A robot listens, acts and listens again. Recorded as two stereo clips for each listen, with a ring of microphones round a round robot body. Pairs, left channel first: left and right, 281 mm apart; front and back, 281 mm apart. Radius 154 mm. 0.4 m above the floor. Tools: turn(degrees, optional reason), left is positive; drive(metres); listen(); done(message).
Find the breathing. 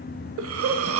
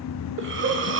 turn(degrees=-130, reason="The breathing: 130° right.")
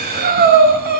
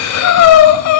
turn(degrees=-30, reason="The breathing is now 30° right.")
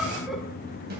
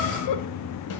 done("Found it: breathing, straight ahead.")